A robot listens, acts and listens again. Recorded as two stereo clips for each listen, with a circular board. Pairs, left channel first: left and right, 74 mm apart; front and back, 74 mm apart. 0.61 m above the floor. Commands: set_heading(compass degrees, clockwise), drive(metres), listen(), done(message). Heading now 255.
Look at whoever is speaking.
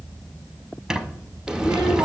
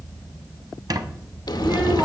set_heading(15)
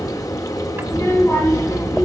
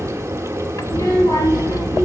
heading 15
set_heading(335)
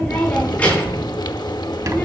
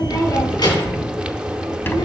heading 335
set_heading(315)
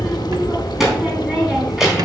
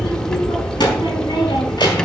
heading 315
done("Found it: a child speaking, straight ahead.")